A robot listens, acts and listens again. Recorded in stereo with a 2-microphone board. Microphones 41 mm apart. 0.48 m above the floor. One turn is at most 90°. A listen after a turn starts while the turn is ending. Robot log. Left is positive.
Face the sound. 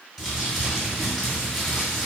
cmd yaw +30
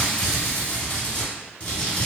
note: So it is at 145° left.
cmd yaw +90
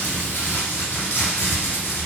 note: The crumpling is now 95° left.
cmd yaw +90
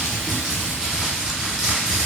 note: The crumpling is now 15° right.
cmd yaw -15
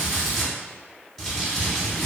end: Found it: crumpling, straight ahead.